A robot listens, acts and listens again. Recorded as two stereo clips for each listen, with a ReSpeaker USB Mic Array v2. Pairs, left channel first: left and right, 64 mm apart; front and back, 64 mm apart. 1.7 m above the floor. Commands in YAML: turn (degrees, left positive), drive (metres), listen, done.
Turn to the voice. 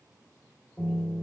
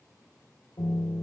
listen: true
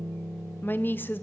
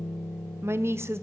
turn: 145
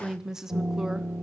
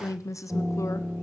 turn: -10
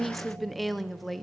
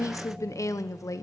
done: "Found it: a woman speaking, straight ahead, under 1 m away."